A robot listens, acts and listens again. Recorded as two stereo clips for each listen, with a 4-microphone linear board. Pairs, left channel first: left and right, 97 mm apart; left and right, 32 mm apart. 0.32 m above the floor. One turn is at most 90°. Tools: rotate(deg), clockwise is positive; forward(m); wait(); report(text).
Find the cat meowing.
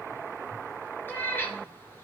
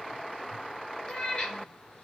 rotate(-20)
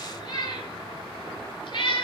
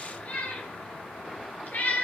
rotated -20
rotate(-90)
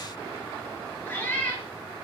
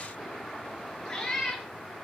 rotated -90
rotate(-20)
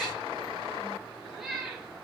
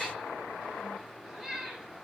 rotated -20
report("Facing the cat meowing, 2 to 4 m away.")